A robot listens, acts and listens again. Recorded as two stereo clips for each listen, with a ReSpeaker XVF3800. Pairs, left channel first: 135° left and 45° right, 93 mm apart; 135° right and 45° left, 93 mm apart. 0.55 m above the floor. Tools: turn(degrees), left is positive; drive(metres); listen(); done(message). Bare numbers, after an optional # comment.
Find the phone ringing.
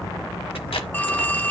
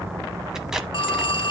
# The phone ringing: 155° right.
turn(-155)
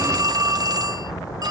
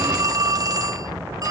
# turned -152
done("Found it: a phone ringing, straight ahead, under 1 m away.")